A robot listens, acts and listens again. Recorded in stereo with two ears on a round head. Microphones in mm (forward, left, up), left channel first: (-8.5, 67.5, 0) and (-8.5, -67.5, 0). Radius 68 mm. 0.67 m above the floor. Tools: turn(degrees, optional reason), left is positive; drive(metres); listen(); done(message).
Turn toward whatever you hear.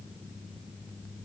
listen()
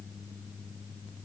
listen()
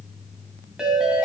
turn(degrees=-30)
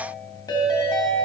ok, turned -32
turn(degrees=25, reason="So it is at 25° left.")
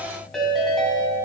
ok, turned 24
done("Found it: a ringtone, straight ahead.")